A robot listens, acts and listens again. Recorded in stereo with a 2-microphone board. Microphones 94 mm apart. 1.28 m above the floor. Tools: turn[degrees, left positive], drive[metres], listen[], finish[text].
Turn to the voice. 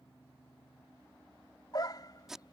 Action: listen[]
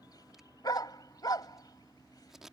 Action: listen[]
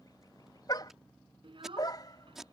Thought: The child speaking: about 60° right or 120° right.
Action: turn[-60]
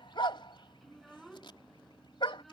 Action: finish[Found it: a child speaking, straight ahead.]